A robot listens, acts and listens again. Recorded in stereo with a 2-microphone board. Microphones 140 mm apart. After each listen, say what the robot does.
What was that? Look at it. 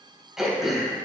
Turn 30° right.
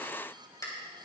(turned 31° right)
Turn 25° left.
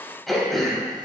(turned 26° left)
Facing the throat clearing.